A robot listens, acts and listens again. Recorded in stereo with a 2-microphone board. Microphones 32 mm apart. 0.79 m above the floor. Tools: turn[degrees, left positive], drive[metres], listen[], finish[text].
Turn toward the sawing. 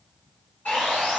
Thought: The sawing: about 50° left or 130° left.
Action: turn[50]
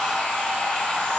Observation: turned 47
Thought: So it is at 80° left.
Action: turn[80]
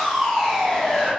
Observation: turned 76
Action: finish[Found it: sawing, straight ahead, 1 to 2 m away.]